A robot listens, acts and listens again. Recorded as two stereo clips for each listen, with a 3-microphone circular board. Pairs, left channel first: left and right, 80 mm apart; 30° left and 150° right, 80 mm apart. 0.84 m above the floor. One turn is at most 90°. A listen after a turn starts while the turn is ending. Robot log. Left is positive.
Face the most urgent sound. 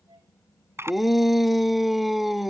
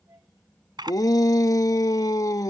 end: Found it: a shout, straight ahead.